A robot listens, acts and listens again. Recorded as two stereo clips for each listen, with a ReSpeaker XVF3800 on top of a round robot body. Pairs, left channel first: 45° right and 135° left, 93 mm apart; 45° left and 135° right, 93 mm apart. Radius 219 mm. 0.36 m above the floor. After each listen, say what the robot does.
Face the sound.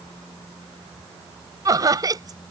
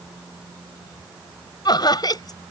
Turn 85° left.
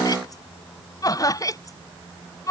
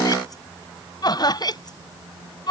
Turn 10° left.
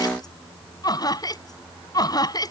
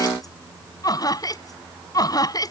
Facing the laughter.